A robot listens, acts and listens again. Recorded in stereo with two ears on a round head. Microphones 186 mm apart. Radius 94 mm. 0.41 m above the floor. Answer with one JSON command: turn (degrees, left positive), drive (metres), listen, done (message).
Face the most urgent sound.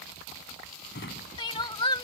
{"turn": 25}
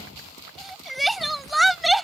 {"done": "Found it: crying, straight ahead."}